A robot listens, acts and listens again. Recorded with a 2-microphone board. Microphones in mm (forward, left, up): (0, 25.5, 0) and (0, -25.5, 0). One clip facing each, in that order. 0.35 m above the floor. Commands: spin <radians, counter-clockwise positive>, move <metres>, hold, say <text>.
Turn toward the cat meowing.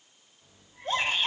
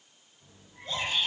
spin -0.52
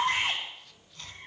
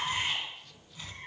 spin -2.36
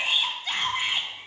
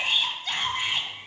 spin -0.87
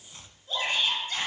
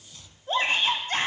spin 0.26
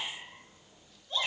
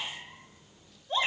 say Facing the cat meowing.